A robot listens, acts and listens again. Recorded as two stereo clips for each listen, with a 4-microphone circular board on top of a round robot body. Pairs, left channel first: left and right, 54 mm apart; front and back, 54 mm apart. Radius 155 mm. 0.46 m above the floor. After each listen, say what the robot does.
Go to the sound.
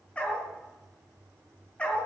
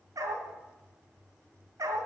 Turn 160° left.
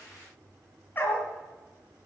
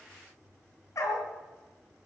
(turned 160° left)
Turn 30° left.
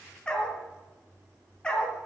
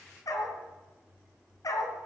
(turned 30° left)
Turn 15° left.
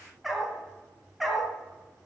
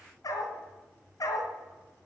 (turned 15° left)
Drive 1.0 m forward.
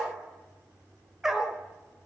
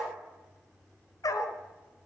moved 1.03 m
Turn 10° right.
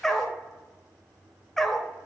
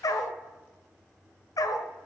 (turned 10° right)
Drive 1.0 m forward.
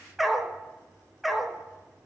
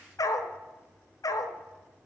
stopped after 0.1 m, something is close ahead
I am next to the dog barking.